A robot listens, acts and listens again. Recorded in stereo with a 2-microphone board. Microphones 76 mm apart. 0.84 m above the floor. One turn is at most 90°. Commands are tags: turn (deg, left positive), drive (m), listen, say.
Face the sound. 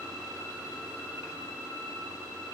<listen/>
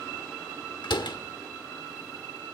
<turn deg="90"/>
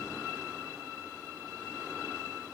<say>Facing where the door slam came from. I can't hear it now.</say>